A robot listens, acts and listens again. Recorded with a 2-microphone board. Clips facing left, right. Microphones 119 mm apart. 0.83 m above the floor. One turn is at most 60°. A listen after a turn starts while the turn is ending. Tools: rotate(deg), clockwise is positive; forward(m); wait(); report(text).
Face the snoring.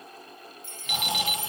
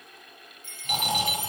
rotate(45)
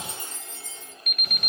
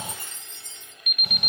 wait()
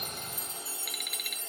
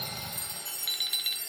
rotate(60)
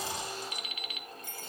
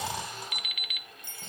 rotate(30)
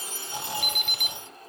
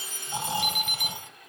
rotate(25)
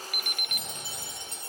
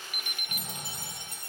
rotate(10)
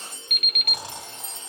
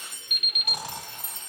report("Facing the snoring, 2 to 4 m away.")